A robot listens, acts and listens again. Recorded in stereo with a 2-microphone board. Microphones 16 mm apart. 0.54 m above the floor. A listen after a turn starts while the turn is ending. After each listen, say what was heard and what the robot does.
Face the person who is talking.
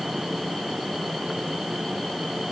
Keep listening.
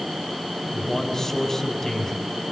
The man speaking: about 30° left or 150° left. Turn 30° left.
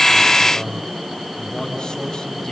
So it is at 120° left. Turn 120° left.
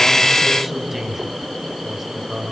The man speaking is now 15° right. Turn 15° right.
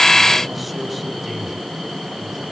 Facing the man speaking, over 4 m away.